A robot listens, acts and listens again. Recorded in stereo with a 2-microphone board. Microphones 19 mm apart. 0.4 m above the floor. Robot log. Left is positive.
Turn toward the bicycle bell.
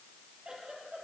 cmd idle
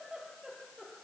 cmd idle
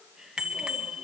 note: The bicycle bell: about 55° right or 125° right.
cmd yaw -55
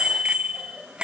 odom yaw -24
note: So it is at 95° right.
cmd yaw -95
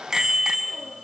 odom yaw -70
note: The bicycle bell is now 25° right.
cmd yaw -25
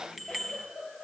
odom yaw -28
end: Facing the bicycle bell.